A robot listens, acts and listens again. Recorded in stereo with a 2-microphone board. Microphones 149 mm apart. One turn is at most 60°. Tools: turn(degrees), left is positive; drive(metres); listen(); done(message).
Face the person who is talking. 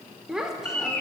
turn(degrees=-30)
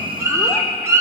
listen()
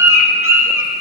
listen()
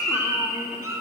done("I heard a child speaking, but can't make it out now. It was about 25° left or 145° right.")